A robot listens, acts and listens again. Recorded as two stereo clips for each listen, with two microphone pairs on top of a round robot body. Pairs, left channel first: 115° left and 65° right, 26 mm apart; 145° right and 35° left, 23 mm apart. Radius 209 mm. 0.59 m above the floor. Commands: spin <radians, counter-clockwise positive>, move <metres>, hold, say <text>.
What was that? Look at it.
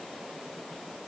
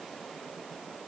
hold
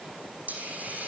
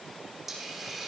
spin -0.79
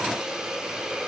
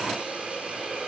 say Facing the hiss, over 4 m away.